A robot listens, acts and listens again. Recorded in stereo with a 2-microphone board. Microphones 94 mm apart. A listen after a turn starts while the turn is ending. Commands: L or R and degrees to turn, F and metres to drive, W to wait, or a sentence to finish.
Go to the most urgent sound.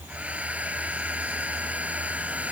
W
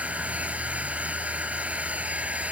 W
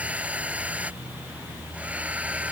I can't make out anything urgent, only a hair dryer.